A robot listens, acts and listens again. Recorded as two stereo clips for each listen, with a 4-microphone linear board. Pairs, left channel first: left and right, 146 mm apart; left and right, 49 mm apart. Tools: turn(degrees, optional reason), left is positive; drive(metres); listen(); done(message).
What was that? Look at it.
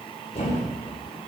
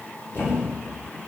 turn(degrees=50, reason="The thud: about 50° left or 130° left.")
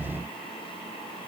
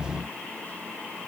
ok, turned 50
listen()
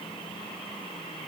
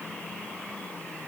done("I heard a thud, but can't make it out now. It was about straight ahead or 80° left.")